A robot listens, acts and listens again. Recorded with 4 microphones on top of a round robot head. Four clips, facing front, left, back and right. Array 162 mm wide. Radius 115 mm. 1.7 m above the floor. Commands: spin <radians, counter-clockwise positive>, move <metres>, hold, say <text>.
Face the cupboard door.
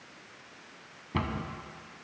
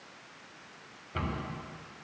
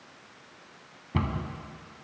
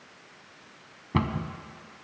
spin -1.57
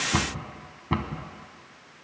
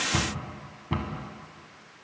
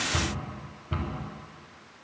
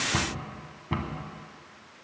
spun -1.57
say Found it: a cupboard door, straight ahead, 1 to 2 m away.